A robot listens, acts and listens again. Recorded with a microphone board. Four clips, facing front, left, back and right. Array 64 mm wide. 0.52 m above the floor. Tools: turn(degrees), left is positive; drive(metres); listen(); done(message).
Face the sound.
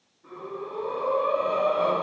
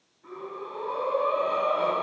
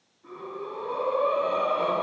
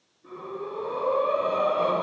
turn(degrees=105)
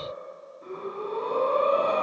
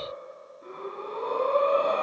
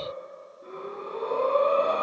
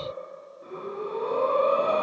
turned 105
turn(degrees=45)
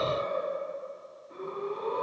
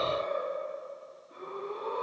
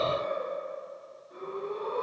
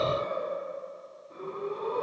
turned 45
done("Facing the breathing.")